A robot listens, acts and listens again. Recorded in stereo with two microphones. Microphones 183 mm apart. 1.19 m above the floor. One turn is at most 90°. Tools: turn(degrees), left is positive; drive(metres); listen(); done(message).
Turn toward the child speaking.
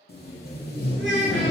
turn(degrees=-90)
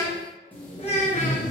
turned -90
turn(degrees=35)
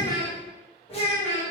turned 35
turn(degrees=35)
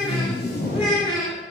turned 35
done("Facing the child speaking.")